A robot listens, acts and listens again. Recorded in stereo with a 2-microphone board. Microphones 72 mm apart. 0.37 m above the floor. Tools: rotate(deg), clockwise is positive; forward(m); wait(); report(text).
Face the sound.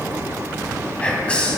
rotate(-15)
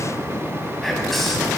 wait()
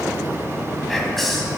report("Found it: whispering, straight ahead.")